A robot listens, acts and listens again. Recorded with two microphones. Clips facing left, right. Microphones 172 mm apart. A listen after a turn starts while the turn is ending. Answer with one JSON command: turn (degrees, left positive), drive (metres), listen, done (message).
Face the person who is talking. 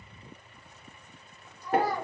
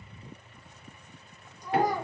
{"turn": -15}
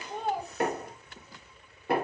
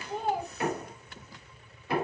{"done": "Found it: a child speaking, straight ahead."}